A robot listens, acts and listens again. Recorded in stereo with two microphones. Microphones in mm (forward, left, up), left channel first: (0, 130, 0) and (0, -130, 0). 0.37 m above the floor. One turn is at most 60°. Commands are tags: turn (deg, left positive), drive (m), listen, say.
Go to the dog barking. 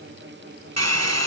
<listen/>
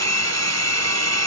<listen/>
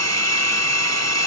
<say>I can't make out a dog barking, only a hair dryer.</say>